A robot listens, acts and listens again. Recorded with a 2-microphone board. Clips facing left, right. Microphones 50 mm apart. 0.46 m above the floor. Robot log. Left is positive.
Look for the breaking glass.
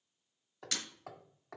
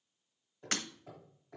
note: The breaking glass: about 40° right or 140° right.
cmd yaw -40
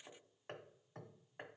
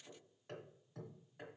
cmd idle
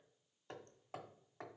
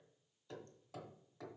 end: I heard breaking glass, but can't make it out now. It was about straight ahead or 100° right.